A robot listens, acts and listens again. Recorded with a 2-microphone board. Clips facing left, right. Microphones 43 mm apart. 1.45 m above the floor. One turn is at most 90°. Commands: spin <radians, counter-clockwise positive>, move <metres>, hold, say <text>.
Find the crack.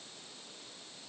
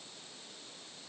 hold
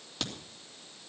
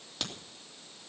spin -0.52
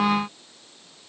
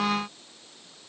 hold
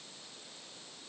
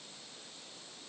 say I heard a crack, but can't make it out now. It was about 25° left or 145° right.